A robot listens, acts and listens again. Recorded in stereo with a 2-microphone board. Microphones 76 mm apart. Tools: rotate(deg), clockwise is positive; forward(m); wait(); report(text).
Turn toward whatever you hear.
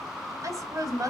rotate(55)
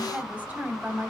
rotate(30)
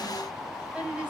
rotate(15)
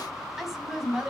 rotate(10)
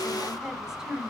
rotate(10)
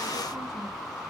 wait()
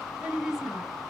report("Found it: a woman speaking, straight ahead, over 4 m away.")